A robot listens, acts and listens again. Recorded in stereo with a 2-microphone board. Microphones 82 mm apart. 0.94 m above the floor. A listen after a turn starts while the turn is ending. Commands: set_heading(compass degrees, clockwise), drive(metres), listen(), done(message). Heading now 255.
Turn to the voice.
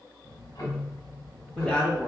set_heading(225)
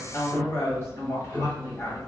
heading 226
set_heading(86)
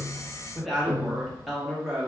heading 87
done("Facing the woman speaking.")